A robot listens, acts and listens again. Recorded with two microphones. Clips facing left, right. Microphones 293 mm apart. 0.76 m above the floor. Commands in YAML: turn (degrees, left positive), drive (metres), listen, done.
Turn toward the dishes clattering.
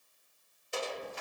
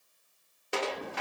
turn: -75
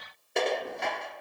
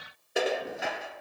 done: "Found it: dishes clattering, straight ahead, under 1 m away."